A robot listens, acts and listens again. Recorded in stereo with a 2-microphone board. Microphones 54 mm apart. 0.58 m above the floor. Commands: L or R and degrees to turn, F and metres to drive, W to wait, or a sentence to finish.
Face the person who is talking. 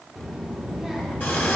R30
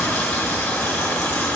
W
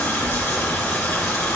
L25
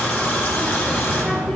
Facing the child speaking, under 1 m away.